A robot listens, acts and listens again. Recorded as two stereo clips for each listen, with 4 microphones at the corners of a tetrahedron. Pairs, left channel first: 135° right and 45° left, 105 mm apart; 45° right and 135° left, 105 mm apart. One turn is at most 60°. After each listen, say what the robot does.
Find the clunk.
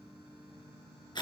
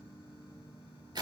Keep listening.
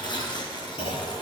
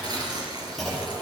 Turn 60° right.
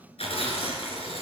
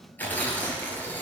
Turn 60° right.
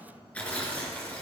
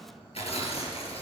Turn 15° right.
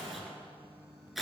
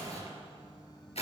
I heard a clunk from this way, but can't make it out now.